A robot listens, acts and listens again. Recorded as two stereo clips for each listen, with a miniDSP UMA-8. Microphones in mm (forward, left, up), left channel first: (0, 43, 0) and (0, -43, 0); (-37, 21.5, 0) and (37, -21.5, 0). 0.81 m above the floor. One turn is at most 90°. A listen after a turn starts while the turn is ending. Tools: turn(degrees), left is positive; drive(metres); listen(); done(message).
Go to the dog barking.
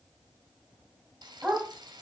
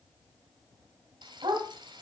drive(metres=1.0)
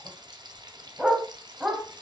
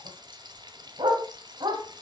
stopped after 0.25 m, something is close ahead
done("Blocked. The dog barking is further on, straight ahead.")